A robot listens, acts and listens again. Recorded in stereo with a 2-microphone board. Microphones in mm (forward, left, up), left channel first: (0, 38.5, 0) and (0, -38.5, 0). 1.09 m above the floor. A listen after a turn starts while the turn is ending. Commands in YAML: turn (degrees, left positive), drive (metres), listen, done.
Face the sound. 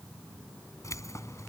turn: 40
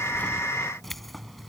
done: "Facing the keys jangling."